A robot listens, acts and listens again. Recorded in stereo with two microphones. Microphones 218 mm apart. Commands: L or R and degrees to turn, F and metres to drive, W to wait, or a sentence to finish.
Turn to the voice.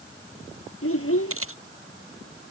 L90
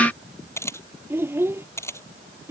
R10
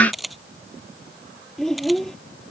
Facing the child speaking.